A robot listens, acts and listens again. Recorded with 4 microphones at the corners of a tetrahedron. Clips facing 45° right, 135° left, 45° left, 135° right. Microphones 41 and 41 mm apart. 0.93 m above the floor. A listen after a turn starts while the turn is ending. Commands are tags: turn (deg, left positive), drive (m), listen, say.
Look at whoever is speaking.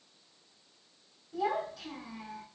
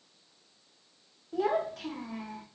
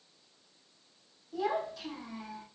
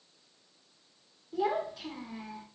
<turn deg="145"/>
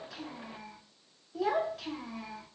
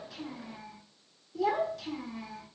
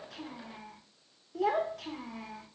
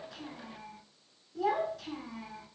<turn deg="15"/>
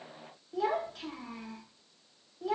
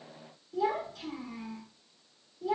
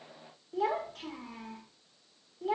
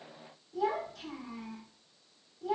<say>Facing the child speaking, 1 to 2 m away.</say>